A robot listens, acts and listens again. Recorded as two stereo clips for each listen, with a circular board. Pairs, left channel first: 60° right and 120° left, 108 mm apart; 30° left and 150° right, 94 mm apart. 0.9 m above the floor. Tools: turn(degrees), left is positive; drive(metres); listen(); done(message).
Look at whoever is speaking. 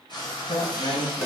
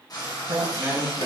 turn(degrees=-90)
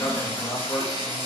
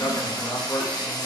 done("Found it: a man speaking, straight ahead, 1 to 2 m away.")